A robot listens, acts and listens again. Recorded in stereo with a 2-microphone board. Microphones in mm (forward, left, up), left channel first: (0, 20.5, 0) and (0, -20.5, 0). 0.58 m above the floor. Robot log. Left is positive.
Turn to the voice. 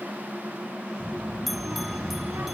note: The child speaking: about 60° right or 120° right.
cmd yaw -60
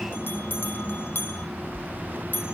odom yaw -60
note: So it is at 60° right.
cmd yaw -60
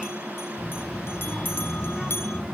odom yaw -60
end: Found it: a child speaking, straight ahead, over 4 m away.